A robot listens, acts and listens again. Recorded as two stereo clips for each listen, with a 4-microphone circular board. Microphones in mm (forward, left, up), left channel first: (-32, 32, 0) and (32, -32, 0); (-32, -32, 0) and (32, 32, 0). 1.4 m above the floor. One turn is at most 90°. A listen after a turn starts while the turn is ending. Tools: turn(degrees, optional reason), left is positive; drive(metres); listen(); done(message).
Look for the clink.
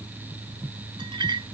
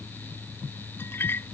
turn(degrees=-70, reason="The clink: 70° right.")
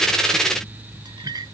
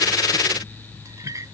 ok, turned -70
done("Facing the clink.")